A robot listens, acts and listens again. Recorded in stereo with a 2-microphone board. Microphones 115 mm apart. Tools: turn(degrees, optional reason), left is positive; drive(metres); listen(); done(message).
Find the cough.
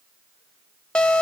listen()
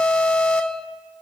listen()
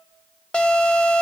done("I can't make out a cough to turn to.")